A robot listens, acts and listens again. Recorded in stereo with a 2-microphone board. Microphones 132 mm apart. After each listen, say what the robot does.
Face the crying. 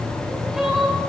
Turn 30° right.
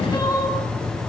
Turn 25° left.
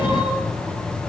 Keep listening.
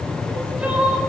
Turn 10° right.
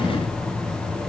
Keep listening.
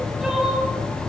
Facing the crying, over 4 m away.